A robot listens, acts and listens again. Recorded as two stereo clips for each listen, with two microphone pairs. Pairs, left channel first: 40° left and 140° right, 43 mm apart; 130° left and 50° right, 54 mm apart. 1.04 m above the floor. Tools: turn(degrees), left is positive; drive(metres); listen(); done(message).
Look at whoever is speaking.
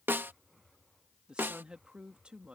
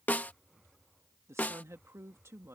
turn(degrees=-75)
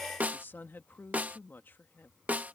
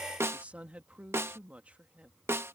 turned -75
turn(degrees=10)
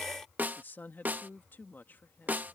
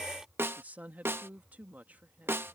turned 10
done("Found it: a woman speaking, straight ahead.")